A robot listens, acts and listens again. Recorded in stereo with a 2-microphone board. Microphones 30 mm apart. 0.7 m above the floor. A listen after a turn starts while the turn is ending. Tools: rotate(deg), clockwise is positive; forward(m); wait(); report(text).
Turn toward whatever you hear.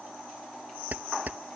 rotate(60)
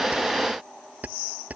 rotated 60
rotate(55)
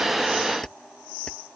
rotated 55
wait()
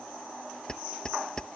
rotate(-25)
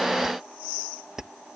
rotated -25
rotate(15)
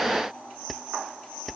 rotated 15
report("Found it: keys jangling, straight ahead.")